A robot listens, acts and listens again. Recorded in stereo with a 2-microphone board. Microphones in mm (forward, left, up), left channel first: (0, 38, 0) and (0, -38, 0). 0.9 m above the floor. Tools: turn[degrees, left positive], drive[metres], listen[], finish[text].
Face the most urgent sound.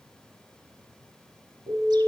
Action: turn[90]
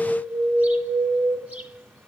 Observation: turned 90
Action: finish[Found it: an alarm, straight ahead, over 4 m away.]